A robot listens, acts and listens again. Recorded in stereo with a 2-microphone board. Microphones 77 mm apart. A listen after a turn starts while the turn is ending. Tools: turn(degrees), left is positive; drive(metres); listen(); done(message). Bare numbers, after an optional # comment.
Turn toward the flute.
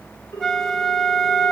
turn(30)
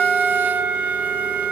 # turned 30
# So it is at 25° right.
turn(-25)
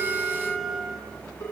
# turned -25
done("Facing the flute, 1 to 2 m away.")